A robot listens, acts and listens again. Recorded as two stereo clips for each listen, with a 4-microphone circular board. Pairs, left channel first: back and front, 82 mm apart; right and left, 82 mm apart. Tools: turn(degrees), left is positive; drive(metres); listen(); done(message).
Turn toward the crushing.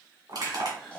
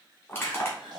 turn(degrees=-30)
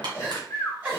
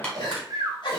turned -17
turn(degrees=-15)
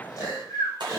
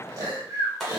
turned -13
done("Facing the crushing, 2 to 4 m away.")